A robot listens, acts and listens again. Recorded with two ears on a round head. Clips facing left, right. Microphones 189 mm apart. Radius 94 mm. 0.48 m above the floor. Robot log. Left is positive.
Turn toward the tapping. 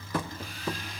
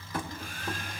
note: The tapping: about 60° left or 120° left.
cmd yaw +60
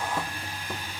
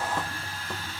cmd idle
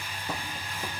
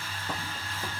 cmd idle
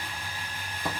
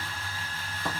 note: So it is at 10° left.
cmd yaw +10
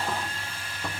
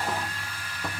cmd idle
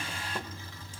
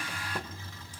cmd idle
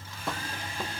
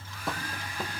end: Facing the tapping.